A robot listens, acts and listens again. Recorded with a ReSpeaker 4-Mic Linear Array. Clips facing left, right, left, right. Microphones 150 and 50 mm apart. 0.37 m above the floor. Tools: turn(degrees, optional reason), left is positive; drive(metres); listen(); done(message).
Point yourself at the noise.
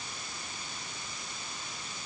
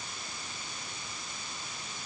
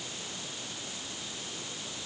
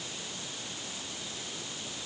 listen()
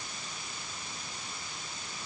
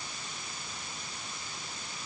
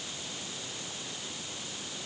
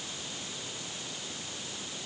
listen()
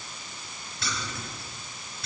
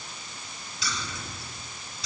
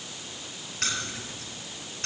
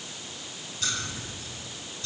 turn(degrees=60, reason="The keys jangling: about 60° left or 120° left.")
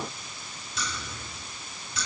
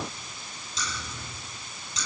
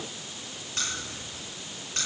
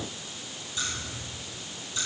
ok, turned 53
turn(degrees=65, reason="So it is at 65° left.")
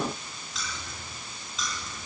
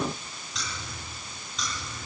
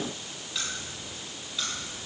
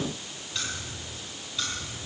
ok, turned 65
done("Found it: keys jangling, straight ahead, over 4 m away.")